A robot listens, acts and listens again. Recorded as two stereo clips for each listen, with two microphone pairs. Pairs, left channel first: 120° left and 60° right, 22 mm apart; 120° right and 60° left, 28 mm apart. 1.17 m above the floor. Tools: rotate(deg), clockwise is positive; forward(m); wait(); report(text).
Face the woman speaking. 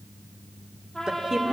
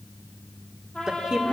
report("Facing the woman speaking, 2 to 4 m away.")